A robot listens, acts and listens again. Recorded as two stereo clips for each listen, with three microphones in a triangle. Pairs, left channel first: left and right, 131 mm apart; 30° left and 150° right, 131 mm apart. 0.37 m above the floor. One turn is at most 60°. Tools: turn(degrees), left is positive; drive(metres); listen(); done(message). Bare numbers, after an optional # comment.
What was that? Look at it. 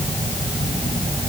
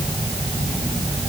listen()
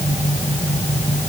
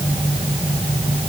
listen()
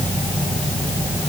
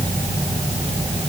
done("I can't make out anything.")